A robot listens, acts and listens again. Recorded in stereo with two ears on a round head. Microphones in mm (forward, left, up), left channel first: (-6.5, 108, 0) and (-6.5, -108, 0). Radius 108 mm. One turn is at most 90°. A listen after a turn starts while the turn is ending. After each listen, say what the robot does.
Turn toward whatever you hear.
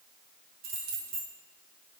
Turn 75° right.
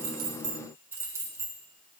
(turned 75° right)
Turn 15° right.
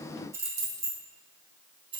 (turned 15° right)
Turn 25° right.
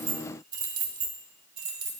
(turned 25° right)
Turn 25° right.
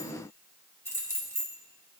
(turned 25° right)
Turn 10° left.
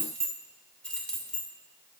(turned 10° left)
Found it: keys jangling, straight ahead.